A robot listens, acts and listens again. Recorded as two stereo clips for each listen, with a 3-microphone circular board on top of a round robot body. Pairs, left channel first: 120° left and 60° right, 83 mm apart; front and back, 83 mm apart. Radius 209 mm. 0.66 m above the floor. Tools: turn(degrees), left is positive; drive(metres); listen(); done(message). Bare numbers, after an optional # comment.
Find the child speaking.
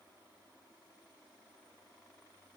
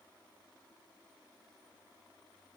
listen()
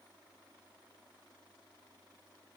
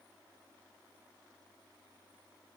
listen()
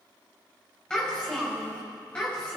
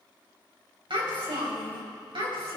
# The child speaking: 165° right.
turn(-165)
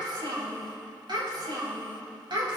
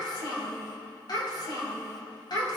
# The child speaking is now 35° right.
turn(-35)
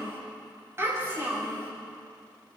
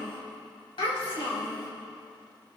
done("Facing the child speaking.")